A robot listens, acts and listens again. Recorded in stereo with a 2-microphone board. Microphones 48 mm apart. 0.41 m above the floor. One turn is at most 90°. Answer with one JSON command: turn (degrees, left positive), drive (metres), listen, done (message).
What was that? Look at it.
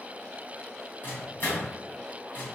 {"turn": 45}
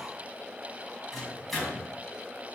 {"done": "Facing the microwave, 1 to 2 m away."}